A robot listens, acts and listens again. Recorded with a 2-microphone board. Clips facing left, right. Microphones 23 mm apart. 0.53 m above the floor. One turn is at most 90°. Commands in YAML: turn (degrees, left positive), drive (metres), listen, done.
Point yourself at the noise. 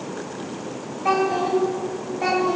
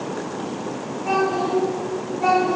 turn: 40
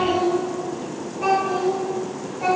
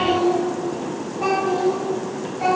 turn: -25
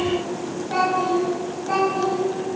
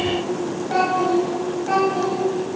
turn: -25
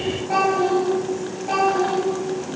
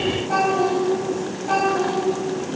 done: "Found it: a child speaking, straight ahead, 2 to 4 m away."